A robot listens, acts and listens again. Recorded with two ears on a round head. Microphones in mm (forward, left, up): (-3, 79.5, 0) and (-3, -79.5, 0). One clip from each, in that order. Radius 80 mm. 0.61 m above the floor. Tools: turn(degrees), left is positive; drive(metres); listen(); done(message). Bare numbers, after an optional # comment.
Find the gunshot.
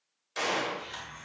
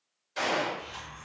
# The gunshot: about 40° left or 140° left.
turn(40)
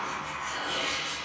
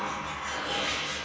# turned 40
listen()
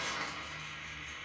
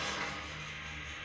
done("I heard a gunshot, but can't make it out now. It was about straight ahead or 100° left.")